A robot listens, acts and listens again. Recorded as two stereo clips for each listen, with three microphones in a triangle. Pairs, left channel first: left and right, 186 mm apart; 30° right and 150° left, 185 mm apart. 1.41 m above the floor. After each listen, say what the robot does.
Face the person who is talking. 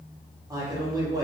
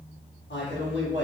Turn 20° right.
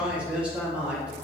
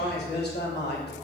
Facing the man speaking.